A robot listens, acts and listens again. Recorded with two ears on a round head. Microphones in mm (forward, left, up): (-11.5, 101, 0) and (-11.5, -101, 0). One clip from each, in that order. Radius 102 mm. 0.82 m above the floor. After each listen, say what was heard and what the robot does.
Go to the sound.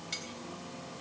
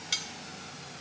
The cutlery clinking: about 35° right or 145° right. Turn 35° right.
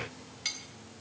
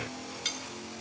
Drive 1.0 m forward.
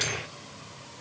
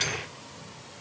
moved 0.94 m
Keep listening.
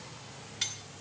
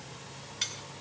Drive 1.0 m forward.
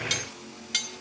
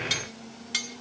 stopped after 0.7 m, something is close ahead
The cutlery clinking is now 10° left. Turn 10° left.
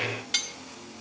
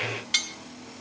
I am next to the cutlery clinking.